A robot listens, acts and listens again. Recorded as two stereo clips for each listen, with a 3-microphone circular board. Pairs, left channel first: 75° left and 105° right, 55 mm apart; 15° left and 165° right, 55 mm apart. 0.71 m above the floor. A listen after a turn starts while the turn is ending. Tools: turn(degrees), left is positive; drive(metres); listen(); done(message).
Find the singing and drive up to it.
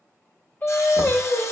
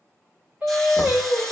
turn(degrees=130)
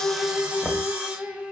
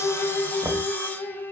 drive(metres=1.0)
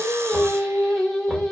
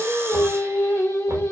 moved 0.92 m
drive(metres=1.0)
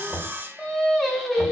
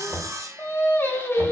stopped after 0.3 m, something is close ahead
done("I am next to the singing.")